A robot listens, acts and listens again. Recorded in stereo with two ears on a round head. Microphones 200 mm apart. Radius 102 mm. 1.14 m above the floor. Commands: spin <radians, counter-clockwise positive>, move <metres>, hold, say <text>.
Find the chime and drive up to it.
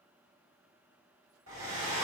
hold
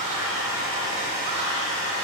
hold
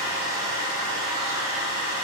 say I can't make out a chime to turn to.